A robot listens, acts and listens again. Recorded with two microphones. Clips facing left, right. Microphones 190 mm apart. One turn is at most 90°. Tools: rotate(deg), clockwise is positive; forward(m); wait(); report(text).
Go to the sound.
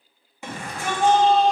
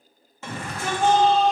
rotate(-30)
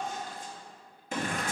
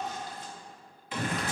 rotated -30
rotate(-90)
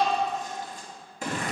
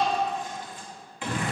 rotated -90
rotate(-40)
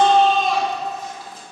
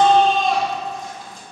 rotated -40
forward(1.0)
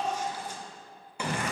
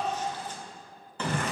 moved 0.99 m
rotate(-10)
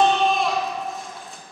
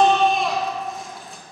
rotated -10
forward(1.0)
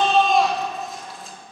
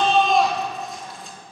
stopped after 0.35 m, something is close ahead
report("Arrived at the shout, straight ahead.")